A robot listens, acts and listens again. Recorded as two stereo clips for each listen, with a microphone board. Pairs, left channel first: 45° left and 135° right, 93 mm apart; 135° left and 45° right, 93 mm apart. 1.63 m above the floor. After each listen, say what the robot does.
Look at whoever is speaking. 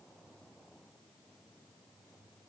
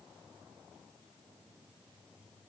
Keep listening.
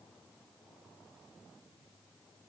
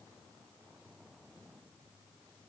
Keep listening.
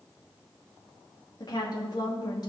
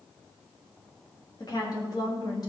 Turn 90° left.
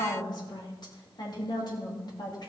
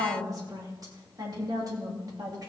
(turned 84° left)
Facing the woman speaking, 2 to 4 m away.